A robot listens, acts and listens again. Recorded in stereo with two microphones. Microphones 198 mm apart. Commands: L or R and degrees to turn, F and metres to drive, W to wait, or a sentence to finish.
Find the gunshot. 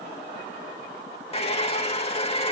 W
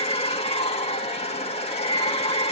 W
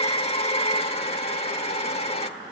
I can't make out a gunshot, only a hair dryer.